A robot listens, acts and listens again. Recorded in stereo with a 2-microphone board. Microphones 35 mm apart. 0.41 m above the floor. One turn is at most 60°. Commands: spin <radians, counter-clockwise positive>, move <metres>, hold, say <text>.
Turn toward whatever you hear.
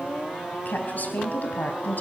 spin 0.96
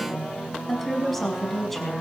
say Facing the woman speaking.